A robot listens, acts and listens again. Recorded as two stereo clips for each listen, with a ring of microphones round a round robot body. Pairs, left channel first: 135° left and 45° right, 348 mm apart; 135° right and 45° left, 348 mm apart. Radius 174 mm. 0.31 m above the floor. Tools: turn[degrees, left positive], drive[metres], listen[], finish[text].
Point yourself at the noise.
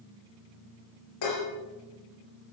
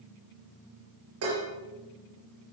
Thought: The dishes clattering: 95° left.
Action: turn[95]
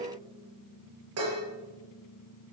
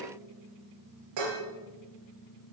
Action: finish[Found it: dishes clattering, straight ahead, over 4 m away.]